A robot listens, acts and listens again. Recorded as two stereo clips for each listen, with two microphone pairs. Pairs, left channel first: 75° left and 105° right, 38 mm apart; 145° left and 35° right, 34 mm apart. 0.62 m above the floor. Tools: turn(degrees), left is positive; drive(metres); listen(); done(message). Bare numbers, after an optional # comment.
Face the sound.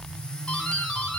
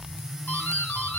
# The doorbell: 140° left.
turn(140)
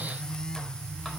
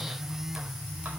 listen()
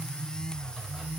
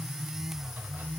listen()
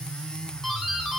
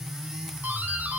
done("Found it: a doorbell, straight ahead, over 4 m away.")